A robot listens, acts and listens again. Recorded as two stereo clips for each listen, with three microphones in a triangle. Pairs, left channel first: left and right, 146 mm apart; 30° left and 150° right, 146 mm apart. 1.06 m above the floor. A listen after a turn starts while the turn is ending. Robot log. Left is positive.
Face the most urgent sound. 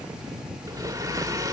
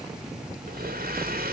cmd idle
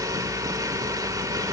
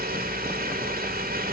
cmd idle
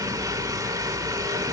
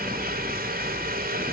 end: I can't make out anything urgent to turn to.